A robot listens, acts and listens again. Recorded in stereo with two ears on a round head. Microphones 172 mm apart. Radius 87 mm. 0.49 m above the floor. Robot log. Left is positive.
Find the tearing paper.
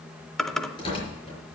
note: The tearing paper: about 25° left or 155° left.
cmd yaw +25
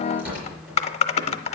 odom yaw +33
note: So it is at 10° right.
cmd yaw -10
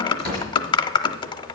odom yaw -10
end: Facing the tearing paper, over 4 m away.